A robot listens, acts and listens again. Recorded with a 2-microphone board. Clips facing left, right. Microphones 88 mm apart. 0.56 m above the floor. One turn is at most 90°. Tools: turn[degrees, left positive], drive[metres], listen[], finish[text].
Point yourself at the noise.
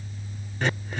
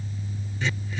Thought: The throat clearing: about 55° left or 125° left.
Action: turn[55]
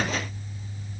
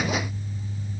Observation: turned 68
Action: listen[]
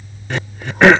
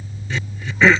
Thought: So it is at 60° left.
Action: turn[60]
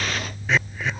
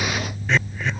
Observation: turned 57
Action: finish[Found it: throat clearing, straight ahead.]